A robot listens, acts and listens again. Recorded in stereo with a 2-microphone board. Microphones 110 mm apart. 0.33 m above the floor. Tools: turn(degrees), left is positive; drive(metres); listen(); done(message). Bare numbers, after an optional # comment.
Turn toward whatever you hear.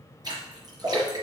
# The splash: about 40° right or 140° right.
turn(-40)
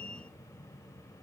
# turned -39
listen()
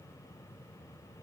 done("I heard a splash, but can't make it out now. It was about straight ahead or 100° right.")